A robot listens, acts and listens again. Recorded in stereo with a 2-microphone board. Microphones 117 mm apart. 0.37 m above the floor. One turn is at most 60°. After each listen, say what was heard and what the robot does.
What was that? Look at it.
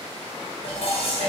The dishes clattering: about 65° left or 115° left. Turn 60° left.
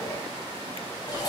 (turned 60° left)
So it is at 40° left. Turn 40° left.
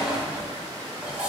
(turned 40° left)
The dishes clattering is now 10° right. Turn 10° right.
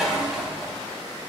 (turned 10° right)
Found it: dishes clattering, straight ahead, 1 to 2 m away.